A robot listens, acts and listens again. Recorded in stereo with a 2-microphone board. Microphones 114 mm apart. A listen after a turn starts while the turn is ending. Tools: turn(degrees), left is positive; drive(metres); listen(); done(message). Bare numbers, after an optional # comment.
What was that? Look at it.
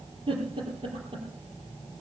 # The giggle: about 50° right or 130° right.
turn(-50)
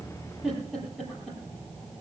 done("Facing the giggle.")